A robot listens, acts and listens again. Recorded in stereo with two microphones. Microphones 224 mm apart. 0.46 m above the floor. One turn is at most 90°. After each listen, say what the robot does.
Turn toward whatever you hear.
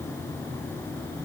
Keep listening.
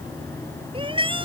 Turn 25° right.
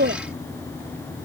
Turn 90° right.
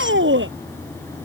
Turn 65° right.
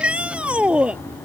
Found it: a shout, straight ahead.